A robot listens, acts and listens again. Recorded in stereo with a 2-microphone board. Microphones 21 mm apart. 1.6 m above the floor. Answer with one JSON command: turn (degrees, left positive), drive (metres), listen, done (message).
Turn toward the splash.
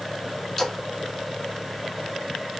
{"turn": 30}
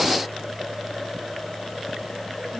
{"listen": true}
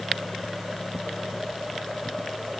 {"done": "I heard a splash, but can't make it out now. It was about 20° right or 140° left."}